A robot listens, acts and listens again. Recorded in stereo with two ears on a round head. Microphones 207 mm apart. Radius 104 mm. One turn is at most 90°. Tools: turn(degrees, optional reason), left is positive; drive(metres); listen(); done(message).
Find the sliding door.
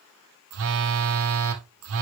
listen()
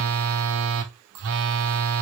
listen()
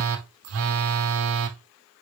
done("I can't make out a sliding door, only a phone buzzing.")